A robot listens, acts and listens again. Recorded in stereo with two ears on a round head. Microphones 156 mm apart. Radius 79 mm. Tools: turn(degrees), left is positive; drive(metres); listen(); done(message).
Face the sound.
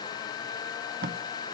turn(degrees=-60)
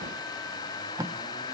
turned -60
turn(degrees=-20)
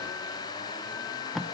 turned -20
done("Found it: tape being pulled, straight ahead, 1 to 2 m away.")